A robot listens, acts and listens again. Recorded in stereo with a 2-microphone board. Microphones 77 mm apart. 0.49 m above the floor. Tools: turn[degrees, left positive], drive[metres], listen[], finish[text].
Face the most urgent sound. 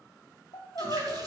Thought: The crying: about 75° left or 105° left.
Action: turn[75]
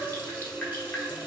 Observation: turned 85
Action: listen[]
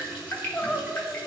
Thought: So it is at 15° left.
Action: turn[15]
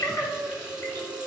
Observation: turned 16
Action: finish[Facing the crying.]